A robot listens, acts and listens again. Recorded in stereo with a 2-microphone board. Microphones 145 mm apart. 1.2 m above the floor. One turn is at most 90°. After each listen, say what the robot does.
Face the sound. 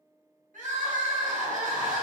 Turn 65° right.
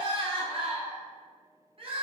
Turn 45° right.
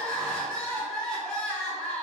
Facing the crying.